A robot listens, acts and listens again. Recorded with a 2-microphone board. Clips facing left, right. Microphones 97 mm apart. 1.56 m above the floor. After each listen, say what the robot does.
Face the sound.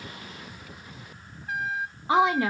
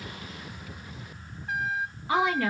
Turn 20° left.
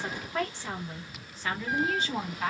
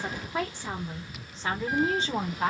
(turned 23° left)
Turn 40° right.
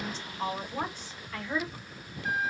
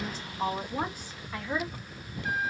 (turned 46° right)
Turn 15° right.
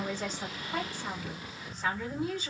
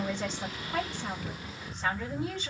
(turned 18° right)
Found it: a woman speaking, straight ahead, 2 to 4 m away.